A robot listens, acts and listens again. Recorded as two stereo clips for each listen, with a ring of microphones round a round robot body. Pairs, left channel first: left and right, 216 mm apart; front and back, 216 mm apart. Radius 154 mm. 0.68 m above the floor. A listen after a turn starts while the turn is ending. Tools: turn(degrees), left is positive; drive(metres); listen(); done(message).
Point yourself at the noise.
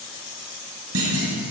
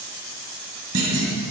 turn(degrees=-135)
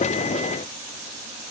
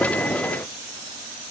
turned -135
done("I heard a clunk from this way, but can't make it out now.")